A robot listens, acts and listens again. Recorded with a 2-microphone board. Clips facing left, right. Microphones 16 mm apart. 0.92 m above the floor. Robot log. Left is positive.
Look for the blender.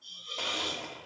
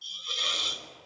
note: The blender: about 55° left or 125° left.
cmd yaw +55
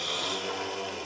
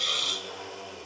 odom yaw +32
note: So it is at 50° left.
cmd yaw +50
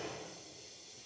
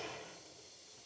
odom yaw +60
note: The blender is now 15° right.
cmd yaw -15
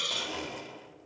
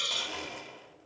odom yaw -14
end: Facing the blender.